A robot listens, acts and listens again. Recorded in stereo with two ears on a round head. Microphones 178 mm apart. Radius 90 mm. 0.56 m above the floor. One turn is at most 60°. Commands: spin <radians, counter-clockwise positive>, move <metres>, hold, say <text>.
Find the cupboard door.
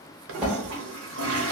spin -0.52
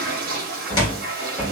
spin 0.44
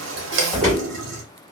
say Facing the cupboard door.